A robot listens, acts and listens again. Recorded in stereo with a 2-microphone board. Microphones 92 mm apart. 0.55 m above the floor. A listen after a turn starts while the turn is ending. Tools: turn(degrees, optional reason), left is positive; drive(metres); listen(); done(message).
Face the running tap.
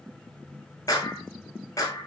listen()
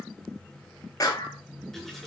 turn(degrees=30)
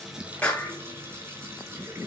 turn(degrees=-25, reason="So it is at 25° right.")
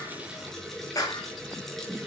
done("Facing the running tap.")